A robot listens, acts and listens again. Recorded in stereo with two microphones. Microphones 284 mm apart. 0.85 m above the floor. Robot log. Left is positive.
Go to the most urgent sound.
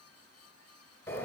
cmd idle
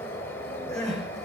cmd yaw +30
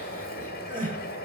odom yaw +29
note: So it is at 30° right.
cmd yaw -30
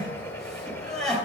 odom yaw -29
cmd fwd 1.0
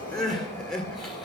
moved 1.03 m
cmd fwd 1.0
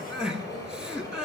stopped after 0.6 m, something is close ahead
end: Arrived at the crying, straight ahead.